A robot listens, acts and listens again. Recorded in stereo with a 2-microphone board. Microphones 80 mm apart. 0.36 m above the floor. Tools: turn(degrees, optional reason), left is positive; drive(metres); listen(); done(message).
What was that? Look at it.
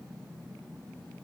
listen()
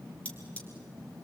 turn(degrees=20, reason="The cutlery clinking: about 20° left or 160° left.")
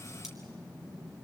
listen()
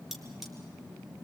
done("Found it: cutlery clinking, straight ahead.")